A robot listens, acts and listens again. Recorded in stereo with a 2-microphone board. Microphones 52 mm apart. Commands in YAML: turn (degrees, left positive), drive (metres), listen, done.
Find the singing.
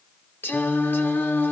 turn: 45
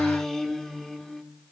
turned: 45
turn: 10
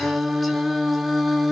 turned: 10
done: "Found it: singing, straight ahead."